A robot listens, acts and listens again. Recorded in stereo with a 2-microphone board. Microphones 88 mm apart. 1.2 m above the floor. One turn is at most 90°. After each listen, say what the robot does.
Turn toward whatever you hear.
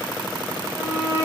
Turn 35° right.
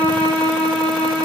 Turn 90° right.
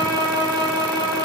Turn 45° right.
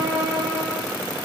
Turn 15° right.
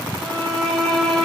Facing the violin, over 4 m away.